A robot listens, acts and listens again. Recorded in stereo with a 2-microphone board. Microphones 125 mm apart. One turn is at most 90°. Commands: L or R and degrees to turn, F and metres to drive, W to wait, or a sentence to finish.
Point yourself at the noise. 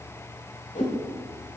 L90
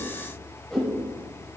Found it: a whoosh, straight ahead, over 4 m away.